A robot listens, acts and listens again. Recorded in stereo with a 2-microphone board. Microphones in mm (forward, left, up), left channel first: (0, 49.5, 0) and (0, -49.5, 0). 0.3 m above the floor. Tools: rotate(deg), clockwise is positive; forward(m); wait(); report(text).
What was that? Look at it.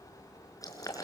rotate(-35)
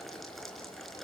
report("Facing the boiling, over 4 m away.")